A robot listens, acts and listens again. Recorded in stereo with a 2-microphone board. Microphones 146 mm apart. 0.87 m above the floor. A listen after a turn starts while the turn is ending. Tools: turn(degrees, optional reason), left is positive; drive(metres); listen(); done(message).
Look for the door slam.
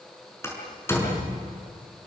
turn(degrees=20, reason="The door slam: about 20° left or 160° left.")
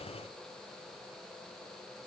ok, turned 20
listen()
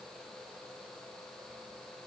done("I heard a door slam, but can't make it out now. It was about straight ahead or 140° left.")